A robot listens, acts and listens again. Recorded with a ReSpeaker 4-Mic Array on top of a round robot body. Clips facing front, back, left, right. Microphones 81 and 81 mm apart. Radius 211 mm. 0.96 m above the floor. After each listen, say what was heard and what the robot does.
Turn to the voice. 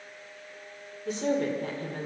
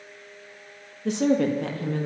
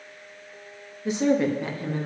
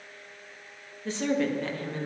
The woman speaking: 165° left. Turn 165° left.
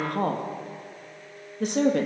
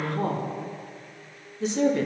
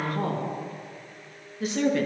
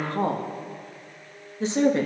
The woman speaking is now 30° right. Turn 30° right.
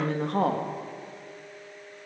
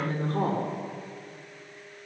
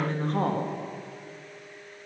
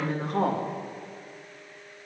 Found it: a woman speaking, straight ahead, 2 to 4 m away.